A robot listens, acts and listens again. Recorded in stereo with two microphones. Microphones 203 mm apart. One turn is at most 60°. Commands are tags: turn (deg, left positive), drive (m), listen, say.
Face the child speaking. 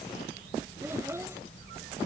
<turn deg="-30"/>
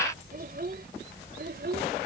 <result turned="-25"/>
<turn deg="-60"/>
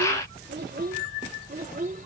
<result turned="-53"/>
<turn deg="-45"/>
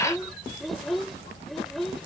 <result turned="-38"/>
<say>Found it: a child speaking, straight ahead.</say>